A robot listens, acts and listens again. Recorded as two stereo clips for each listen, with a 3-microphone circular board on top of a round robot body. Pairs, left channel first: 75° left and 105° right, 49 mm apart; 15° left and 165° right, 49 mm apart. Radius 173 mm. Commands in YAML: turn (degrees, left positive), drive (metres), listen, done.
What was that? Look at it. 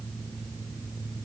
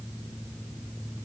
listen: true
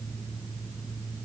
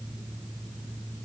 listen: true
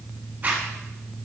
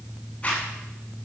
turn: -50
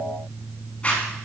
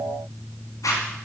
done: "Found it: a zipper, straight ahead, 1 to 2 m away."